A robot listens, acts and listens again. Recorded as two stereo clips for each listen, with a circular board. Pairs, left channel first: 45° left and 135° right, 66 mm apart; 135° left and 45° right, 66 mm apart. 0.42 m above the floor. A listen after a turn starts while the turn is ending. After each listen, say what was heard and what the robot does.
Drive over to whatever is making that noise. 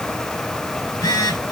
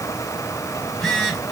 The phone buzzing: 45° left. Turn 45° left.
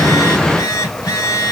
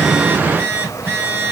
The phone buzzing is now 10° left. Turn 10° left.
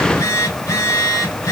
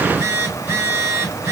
Drive 1.0 m forward.
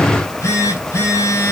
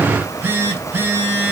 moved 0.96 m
Drive 1.0 m forward.
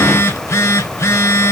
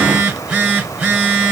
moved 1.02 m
The phone buzzing is now 10° left. Turn 10° left.
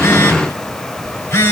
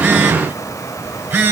Drive 1.0 m forward.
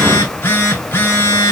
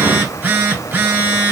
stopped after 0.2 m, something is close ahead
Arrived at the phone buzzing, straight ahead.